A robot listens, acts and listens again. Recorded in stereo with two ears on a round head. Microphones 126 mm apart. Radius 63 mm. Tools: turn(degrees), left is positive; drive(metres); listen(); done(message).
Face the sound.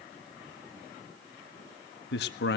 turn(degrees=90)
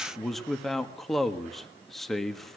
done("Found it: a man speaking, straight ahead, 1 to 2 m away.")